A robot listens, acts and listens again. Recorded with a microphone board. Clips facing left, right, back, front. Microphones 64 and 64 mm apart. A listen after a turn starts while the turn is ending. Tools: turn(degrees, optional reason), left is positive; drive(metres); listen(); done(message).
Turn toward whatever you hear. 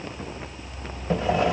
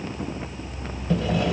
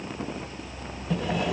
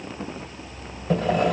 turn(degrees=30, reason="The sawing: 30° left.")
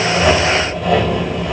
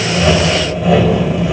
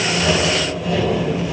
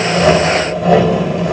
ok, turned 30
done("Found it: sawing, straight ahead, 2 to 4 m away.")